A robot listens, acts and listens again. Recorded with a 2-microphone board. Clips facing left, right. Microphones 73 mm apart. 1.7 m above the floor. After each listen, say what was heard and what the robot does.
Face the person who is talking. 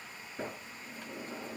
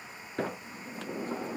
Keep listening.
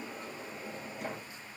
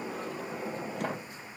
Keep listening.
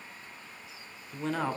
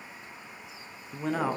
Turn 30° right.
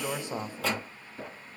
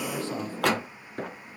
So it is at 20° left. Turn 20° left.
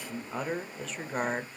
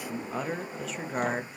Found it: a man speaking, straight ahead, under 1 m away.